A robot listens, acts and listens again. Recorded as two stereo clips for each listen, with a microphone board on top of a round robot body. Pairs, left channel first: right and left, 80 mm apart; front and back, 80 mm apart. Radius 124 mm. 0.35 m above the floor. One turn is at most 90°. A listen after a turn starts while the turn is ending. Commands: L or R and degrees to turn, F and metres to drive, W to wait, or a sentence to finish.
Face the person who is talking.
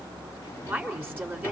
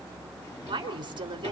L90
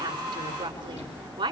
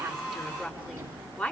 L70
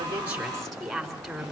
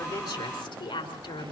Found it: a woman speaking, straight ahead.